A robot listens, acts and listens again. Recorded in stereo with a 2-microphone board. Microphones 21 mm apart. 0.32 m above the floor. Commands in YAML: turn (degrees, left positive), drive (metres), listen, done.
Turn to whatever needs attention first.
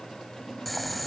listen: true
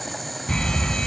turn: 55
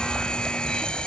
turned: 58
turn: 60
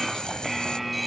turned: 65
done: "Facing the fire alarm."